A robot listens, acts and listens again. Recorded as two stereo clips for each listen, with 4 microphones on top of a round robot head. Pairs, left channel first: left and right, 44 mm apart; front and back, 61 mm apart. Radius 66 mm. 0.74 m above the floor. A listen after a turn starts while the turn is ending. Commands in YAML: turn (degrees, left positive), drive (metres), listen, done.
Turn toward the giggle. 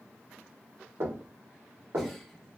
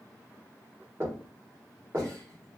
listen: true
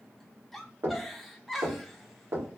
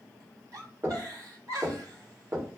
turn: 180
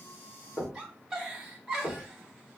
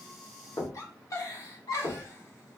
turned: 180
turn: -15
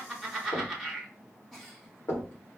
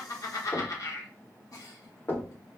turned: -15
done: "Found it: a giggle, straight ahead."